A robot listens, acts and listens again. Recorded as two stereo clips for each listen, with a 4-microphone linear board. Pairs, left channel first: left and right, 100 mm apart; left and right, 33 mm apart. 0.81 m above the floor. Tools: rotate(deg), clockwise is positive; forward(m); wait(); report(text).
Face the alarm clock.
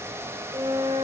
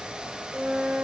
wait()
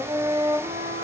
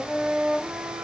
wait()
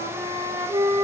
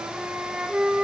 report("I can't make out an alarm clock to turn to.")